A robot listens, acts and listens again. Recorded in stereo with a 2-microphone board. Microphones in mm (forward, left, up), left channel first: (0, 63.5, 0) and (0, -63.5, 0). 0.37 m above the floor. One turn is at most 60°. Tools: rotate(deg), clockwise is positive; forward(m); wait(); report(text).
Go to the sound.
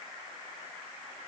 wait()
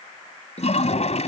rotate(-60)
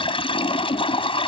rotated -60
rotate(-50)
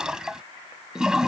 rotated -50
forward(1.0)
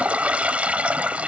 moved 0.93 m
rotate(10)
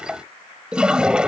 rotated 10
rotate(10)
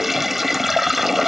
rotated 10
forward(1.0)
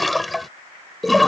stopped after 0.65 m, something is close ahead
report("Arrived at the toilet flushing, straight ahead.")